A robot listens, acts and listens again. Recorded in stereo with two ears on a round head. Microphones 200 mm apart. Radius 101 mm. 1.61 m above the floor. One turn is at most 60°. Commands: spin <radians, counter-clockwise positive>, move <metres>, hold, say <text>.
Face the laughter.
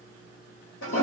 hold
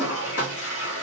hold
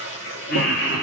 spin 0.96
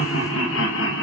spin 0.96
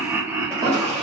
spin -0.26
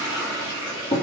hold
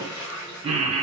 spin -0.44
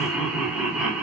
say Facing the laughter.